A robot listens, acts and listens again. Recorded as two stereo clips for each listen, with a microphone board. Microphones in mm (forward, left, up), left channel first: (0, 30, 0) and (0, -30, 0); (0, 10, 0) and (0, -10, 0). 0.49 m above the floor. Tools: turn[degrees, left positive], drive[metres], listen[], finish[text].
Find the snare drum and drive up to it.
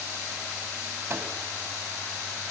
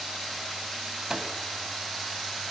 Action: listen[]
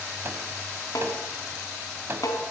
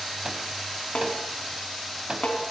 Action: turn[90]
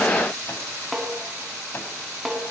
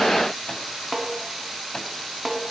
Action: drive[1.0]
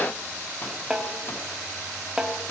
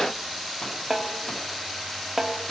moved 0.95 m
Thought: The snare drum is now 10° right.
Action: turn[-10]
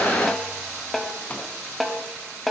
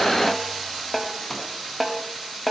Action: drive[1.0]
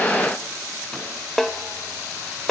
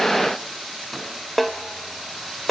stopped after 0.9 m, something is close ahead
Action: finish[Arrived at the snare drum, straight ahead.]